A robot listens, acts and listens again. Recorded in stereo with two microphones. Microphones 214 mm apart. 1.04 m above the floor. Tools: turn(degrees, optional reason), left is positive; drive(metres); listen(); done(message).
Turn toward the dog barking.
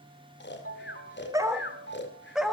turn(degrees=30)
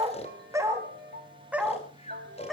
turn(degrees=30)
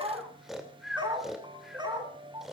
turn(degrees=-20, reason="So it is at 20° right.")
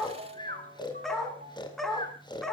done("Facing the dog barking.")